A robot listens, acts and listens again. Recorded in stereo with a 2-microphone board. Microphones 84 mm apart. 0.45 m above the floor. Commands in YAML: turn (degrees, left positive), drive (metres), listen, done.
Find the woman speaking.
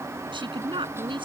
turn: -90
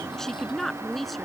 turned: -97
done: "Facing the woman speaking."